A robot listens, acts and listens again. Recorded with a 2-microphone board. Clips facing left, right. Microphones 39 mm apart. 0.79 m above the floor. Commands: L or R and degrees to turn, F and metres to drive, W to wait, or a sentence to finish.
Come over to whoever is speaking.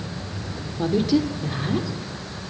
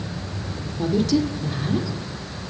L15
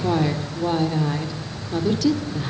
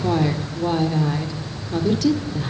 F1.0
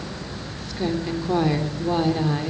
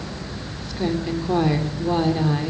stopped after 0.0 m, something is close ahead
Something is in my way. I am facing the woman speaking but have not reached it.